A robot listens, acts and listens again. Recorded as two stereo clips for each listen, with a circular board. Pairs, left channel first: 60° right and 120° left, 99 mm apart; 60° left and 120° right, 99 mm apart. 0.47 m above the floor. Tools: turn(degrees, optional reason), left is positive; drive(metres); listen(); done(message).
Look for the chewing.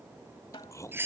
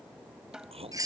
turn(degrees=-120, reason="The chewing: 120° right.")
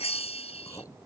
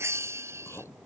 done("Found it: chewing, straight ahead.")